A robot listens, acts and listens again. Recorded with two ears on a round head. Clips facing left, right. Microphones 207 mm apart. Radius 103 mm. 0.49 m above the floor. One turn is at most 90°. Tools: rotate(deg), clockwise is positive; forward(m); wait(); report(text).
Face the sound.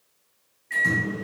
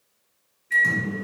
rotate(30)
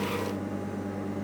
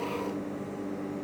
rotate(-15)
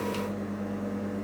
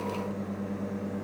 report("Found it: a microwave, straight ahead, 1 to 2 m away.")